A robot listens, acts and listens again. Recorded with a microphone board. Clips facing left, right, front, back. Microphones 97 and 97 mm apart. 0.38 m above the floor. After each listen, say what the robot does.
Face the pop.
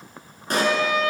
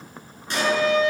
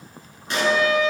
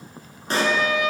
Turn 130° left.
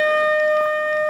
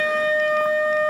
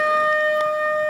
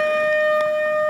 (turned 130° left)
I heard a pop from this way, but can't make it out now.